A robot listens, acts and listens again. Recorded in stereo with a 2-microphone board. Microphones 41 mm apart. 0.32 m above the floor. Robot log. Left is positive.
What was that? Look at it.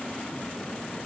cmd idle
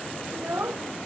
note: The child speaking: about 70° right or 110° right.
cmd yaw -70
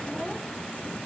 cmd idle
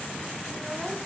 cmd idle
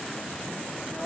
note: So it is at 10° right.
cmd yaw -10
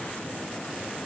cmd idle
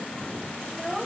end: Facing the child speaking.